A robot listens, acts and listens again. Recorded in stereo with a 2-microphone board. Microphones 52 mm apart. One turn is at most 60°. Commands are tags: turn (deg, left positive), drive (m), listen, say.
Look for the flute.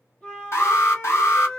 <turn deg="20"/>
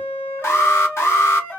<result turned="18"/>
<turn deg="60"/>
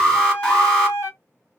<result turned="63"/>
<turn deg="60"/>
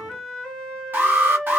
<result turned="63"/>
<turn deg="15"/>
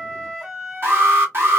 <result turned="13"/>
<say>Facing the flute.</say>